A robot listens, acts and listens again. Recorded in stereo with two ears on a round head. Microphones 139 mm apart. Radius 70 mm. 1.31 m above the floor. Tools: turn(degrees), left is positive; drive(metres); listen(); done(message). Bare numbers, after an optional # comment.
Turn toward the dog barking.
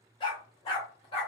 # The dog barking: about 35° left or 145° left.
turn(35)
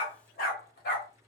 # So it is at 115° left.
turn(115)
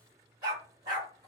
# The dog barking is now 30° right.
turn(-30)
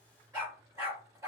# The dog barking is now 15° right.
turn(-15)
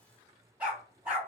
done("Facing the dog barking, 2 to 4 m away.")